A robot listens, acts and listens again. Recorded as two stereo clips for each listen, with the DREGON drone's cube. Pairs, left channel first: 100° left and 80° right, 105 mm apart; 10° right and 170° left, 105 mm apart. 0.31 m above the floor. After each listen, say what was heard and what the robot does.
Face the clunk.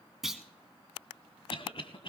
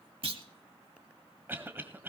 The clunk: 165° right. Turn 165° right.
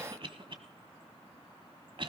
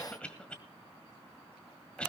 I heard a clunk from this way, but can't make it out now.